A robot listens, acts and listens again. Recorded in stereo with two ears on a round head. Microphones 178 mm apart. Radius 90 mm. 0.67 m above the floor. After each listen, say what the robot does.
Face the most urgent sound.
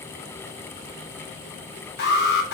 Turn 60° left.
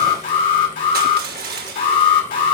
Turn 50° left.
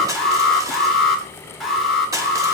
Facing the alarm, 2 to 4 m away.